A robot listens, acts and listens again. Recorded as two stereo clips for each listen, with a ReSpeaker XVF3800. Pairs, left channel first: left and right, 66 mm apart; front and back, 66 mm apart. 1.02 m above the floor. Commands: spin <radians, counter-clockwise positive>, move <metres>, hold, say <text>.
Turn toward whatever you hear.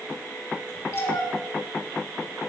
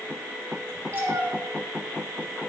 spin 2.18
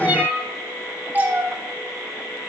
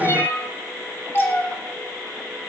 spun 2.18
spin -0.70
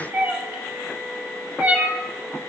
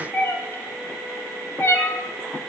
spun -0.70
spin -0.52
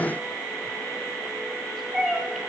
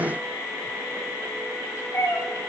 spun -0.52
say Facing the cat meowing, 1 to 2 m away.